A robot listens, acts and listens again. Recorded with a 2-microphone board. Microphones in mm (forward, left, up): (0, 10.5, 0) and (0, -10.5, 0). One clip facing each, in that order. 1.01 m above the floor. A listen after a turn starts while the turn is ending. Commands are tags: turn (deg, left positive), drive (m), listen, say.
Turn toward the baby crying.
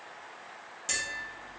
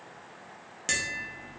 <listen/>
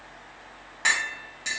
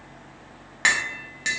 <listen/>
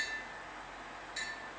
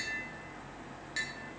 <say>I can't make out a baby crying to turn to.</say>